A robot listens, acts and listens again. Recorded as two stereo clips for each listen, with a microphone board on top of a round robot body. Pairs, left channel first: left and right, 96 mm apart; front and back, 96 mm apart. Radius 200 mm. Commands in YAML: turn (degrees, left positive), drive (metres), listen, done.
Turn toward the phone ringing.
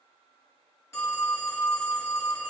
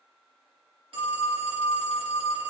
turn: 155
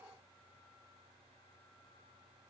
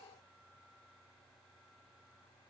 listen: true
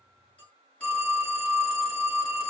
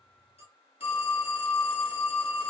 turn: 15
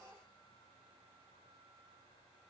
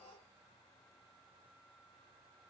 listen: true
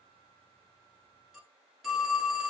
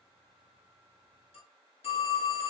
done: "Found it: a phone ringing, straight ahead, 2 to 4 m away."